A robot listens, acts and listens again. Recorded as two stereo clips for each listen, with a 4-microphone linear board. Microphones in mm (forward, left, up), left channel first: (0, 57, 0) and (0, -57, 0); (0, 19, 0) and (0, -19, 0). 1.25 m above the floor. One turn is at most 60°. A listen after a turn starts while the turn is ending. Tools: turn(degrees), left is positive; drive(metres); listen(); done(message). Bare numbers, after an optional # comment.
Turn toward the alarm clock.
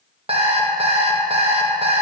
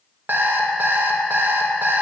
# The alarm clock: about 55° right or 125° right.
turn(-55)
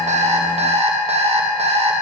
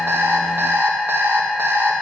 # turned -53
# So it is at 65° right.
turn(-60)
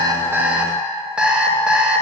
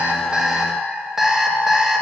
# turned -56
# The alarm clock is now 10° right.
turn(-10)
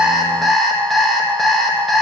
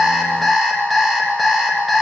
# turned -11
done("Found it: an alarm clock, straight ahead, under 1 m away.")